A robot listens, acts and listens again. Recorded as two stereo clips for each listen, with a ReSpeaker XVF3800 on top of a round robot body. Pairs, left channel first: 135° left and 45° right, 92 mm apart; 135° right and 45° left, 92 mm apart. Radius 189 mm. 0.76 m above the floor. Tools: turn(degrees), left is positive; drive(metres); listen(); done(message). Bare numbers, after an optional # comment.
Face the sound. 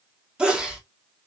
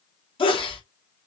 # The sneeze: 125° right.
turn(-125)
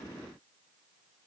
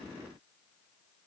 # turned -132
done("I heard a sneeze from this way, but can't make it out now.")